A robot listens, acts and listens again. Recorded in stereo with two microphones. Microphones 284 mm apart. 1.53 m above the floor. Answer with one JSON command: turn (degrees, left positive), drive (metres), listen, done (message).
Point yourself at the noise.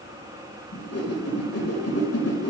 {"turn": 60}
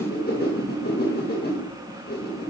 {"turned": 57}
{"turn": 40}
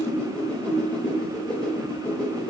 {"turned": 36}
{"done": "Facing the whoosh."}